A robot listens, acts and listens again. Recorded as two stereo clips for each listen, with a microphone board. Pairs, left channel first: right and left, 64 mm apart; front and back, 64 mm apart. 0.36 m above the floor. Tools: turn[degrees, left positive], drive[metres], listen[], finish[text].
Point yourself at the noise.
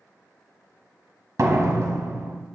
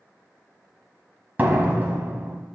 Thought: The door slam: 120° left.
Action: turn[120]
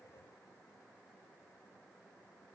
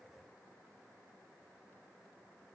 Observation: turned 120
Action: finish[Facing where the door slam came from. I can't hear it now.]